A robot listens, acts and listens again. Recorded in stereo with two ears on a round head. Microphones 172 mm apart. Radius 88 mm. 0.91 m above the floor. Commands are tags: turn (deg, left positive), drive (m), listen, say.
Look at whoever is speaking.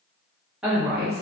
<turn deg="-30"/>
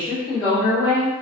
<turn deg="25"/>
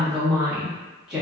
<say>Facing the woman speaking, 1 to 2 m away.</say>